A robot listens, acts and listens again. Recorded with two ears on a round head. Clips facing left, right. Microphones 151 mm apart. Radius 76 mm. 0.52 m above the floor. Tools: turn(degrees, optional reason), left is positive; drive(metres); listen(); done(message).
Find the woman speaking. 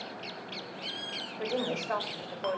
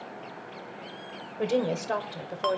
turn(degrees=-35, reason="The woman speaking: about 35° right or 145° right.")
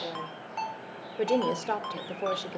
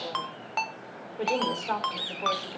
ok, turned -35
turn(degrees=40, reason="So it is at 40° left.")
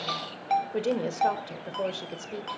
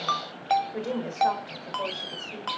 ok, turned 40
turn(degrees=40, reason="The woman speaking is now 40° left.")
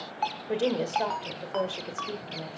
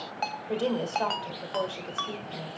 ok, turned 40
turn(degrees=15, reason="The woman speaking is now 15° left.")
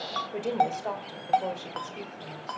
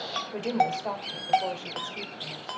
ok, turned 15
done("Found it: a woman speaking, straight ahead, 1 to 2 m away.")